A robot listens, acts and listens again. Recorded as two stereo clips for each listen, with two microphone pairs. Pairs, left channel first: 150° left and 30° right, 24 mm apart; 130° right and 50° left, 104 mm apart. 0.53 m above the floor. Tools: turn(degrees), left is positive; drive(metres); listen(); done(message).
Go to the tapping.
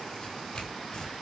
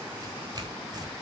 listen()
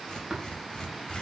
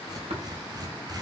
turn(degrees=40)
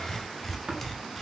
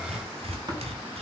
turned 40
drive(metres=1.0)
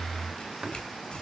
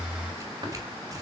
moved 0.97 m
listen()
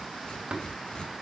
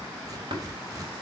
turn(degrees=15)
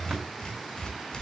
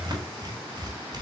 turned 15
listen()
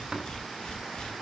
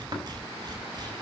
drive(metres=1.0)
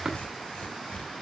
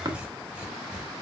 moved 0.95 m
drive(metres=1.0)
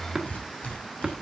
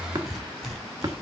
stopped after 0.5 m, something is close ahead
turn(degrees=10)
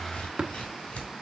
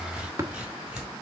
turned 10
done("I am next to the tapping.")